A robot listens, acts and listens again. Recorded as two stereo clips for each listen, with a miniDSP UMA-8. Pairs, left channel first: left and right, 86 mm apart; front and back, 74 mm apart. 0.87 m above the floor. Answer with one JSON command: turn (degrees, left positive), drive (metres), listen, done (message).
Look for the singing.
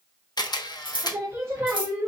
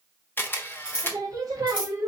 {"turn": -150}
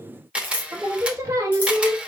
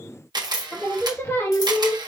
{"turn": -55}
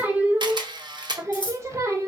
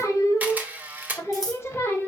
{"turn": -45}
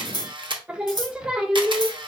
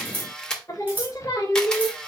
{"turn": -15}
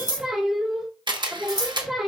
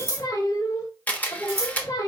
{"done": "Facing the singing."}